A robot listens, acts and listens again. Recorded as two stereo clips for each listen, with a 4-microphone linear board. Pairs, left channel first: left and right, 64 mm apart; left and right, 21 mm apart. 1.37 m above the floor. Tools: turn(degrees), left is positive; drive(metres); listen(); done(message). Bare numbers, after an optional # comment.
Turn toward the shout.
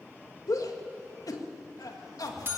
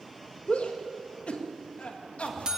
# The shout: about 70° left or 110° left.
turn(70)
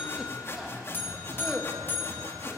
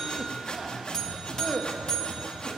done("Found it: a shout, straight ahead, 1 to 2 m away.")